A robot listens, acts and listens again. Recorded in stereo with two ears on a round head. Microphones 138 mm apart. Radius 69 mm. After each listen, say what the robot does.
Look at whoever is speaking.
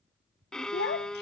Turn 75° left.
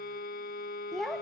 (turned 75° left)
Facing the child speaking.